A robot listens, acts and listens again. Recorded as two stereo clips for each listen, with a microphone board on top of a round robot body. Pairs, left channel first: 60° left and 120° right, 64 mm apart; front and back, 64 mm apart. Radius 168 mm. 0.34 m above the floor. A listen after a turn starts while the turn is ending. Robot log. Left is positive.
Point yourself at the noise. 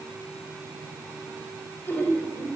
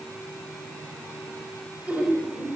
note: The laughter: 115° left.
cmd yaw +115
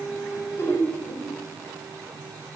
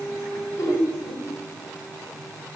note: The laughter is now 20° left.
cmd yaw +20
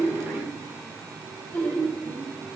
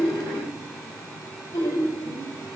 end: Facing the laughter.